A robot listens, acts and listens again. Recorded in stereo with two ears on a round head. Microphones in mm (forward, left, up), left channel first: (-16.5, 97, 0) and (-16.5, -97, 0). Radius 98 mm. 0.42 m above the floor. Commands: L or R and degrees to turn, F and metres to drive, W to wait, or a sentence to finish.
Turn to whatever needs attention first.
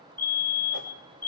L30
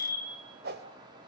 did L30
R15
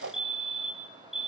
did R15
Facing the fire alarm.